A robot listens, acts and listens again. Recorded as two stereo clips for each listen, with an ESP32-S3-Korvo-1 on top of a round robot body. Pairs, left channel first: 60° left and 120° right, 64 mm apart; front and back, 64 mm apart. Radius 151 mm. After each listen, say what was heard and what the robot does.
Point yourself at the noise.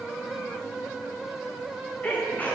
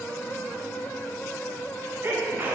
The sneeze: 125° left. Turn 125° left.
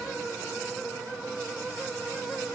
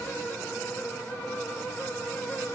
I heard a sneeze from this way, but can't make it out now.